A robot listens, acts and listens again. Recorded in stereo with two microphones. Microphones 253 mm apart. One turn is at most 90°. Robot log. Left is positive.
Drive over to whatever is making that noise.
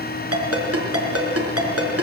note: The ringtone: about 70° right or 110° right.
cmd yaw -70
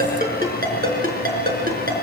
note: So it is at 35° right.
cmd yaw -35
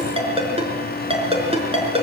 note: The ringtone is now 25° right.
cmd yaw -25
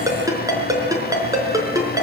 note: The ringtone is now 15° right.
cmd yaw -15
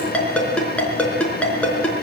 cmd fwd 1.0
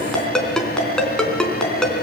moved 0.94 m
cmd fwd 1.0
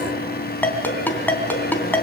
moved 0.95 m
cmd fwd 1.0
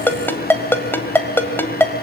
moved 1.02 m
note: The ringtone is now 10° left.
cmd yaw +10
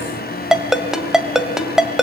cmd fwd 1.0
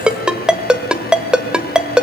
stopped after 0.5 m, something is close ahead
end: Arrived at the ringtone, straight ahead.